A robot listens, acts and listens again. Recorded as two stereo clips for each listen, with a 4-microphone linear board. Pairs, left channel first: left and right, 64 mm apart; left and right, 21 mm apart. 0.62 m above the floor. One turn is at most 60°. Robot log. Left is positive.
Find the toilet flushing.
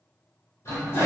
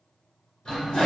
note: The toilet flushing: about 45° left or 135° left.
cmd yaw +45
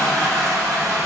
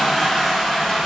end: Facing the toilet flushing.